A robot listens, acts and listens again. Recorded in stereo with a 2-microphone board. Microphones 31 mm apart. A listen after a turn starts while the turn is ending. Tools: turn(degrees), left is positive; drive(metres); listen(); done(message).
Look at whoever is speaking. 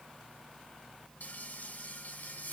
listen()
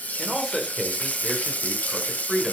turn(degrees=30)
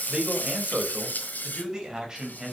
turn(degrees=-20)
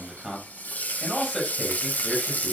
done("Found it: a man speaking, straight ahead.")